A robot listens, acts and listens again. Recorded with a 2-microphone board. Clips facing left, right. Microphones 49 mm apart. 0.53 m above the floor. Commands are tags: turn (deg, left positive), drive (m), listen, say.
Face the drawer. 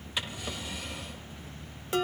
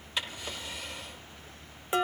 <turn deg="30"/>
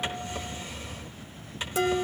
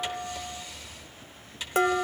<turn deg="145"/>
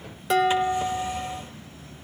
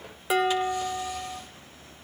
<listen/>
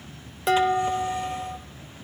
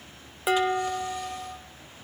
<listen/>
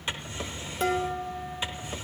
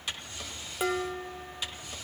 <turn deg="30"/>
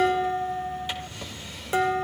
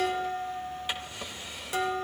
<turn deg="-10"/>
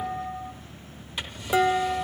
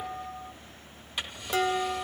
<say>Facing the drawer, under 1 m away.</say>